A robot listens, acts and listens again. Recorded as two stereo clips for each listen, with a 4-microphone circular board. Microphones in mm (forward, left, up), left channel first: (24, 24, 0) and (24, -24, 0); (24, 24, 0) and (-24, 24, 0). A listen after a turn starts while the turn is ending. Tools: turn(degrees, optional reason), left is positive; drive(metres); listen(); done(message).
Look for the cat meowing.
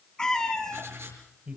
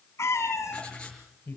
turn(degrees=15, reason="The cat meowing: 15° left.")
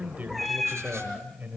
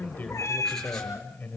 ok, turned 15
done("Facing the cat meowing, 2 to 4 m away.")